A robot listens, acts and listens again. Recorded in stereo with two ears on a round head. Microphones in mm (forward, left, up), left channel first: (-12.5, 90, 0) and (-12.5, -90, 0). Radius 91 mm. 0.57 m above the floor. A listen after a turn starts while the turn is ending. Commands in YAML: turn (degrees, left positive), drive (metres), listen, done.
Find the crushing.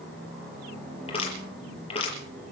turn: 30
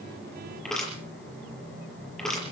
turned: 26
done: "Facing the crushing, over 4 m away."